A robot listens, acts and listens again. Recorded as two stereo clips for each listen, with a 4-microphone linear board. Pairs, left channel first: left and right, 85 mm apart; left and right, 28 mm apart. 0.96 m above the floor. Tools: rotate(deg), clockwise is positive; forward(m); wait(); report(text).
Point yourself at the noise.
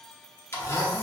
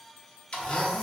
rotate(-30)
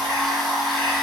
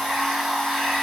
report("Facing the blender.")